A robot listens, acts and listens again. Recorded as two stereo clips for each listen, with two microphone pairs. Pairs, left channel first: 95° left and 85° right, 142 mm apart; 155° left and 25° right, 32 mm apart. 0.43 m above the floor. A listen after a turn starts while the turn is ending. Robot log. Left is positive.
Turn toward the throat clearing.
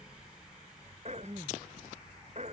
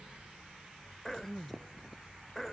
note: The throat clearing: 125° right.
cmd yaw -125
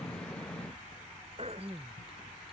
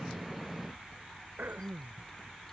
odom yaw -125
note: The throat clearing is now 45° right.
cmd yaw -45
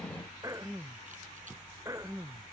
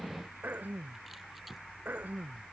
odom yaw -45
note: The throat clearing is now 20° right.
cmd yaw -20
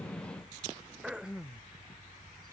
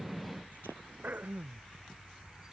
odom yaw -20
end: Facing the throat clearing.